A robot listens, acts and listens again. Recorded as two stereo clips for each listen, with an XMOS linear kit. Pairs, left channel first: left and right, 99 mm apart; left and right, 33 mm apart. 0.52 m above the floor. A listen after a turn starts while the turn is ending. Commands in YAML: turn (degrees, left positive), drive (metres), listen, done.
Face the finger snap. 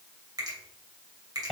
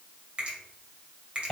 turn: -40
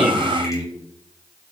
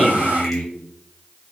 listen: true
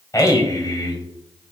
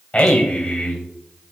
done: "Found it: a finger snap, straight ahead, 2 to 4 m away."